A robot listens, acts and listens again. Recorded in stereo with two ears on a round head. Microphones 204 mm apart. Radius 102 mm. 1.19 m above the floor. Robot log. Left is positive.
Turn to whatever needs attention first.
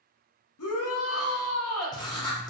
note: The shout: about 70° left or 110° left.
cmd yaw +70
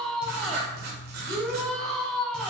end: Found it: a shout, straight ahead.